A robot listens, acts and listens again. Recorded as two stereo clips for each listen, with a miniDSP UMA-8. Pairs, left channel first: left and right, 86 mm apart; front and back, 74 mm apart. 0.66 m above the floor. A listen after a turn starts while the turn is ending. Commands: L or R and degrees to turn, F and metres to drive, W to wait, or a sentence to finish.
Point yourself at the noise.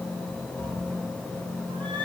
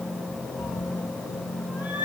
R115
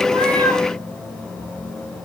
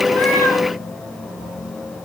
W
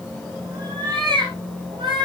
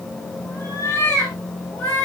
R65
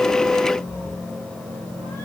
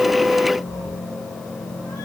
W
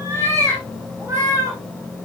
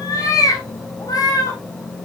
R30
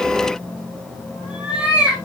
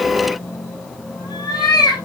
R10
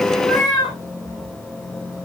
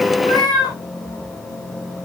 Facing the cat meowing.